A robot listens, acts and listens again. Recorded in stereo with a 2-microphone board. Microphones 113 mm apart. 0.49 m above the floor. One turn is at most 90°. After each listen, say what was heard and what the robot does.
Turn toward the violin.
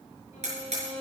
Turn 90° left.
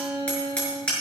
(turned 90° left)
Facing the violin.